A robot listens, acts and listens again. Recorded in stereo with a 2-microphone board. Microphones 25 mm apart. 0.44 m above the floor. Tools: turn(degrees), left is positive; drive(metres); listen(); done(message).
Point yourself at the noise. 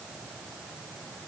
listen()
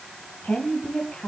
turn(degrees=70)
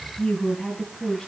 turn(degrees=25)
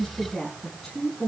turn(degrees=10)
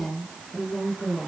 done("Found it: a woman speaking, straight ahead, over 4 m away.")